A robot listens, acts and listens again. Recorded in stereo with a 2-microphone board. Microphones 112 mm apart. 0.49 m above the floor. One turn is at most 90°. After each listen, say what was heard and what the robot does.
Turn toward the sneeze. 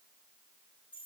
Keep listening.
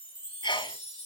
The sneeze: about 45° left or 135° left. Turn 45° left.
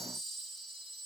Keep listening.
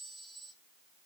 I heard a sneeze, but can't make it out now. It was about straight ahead or 90° left.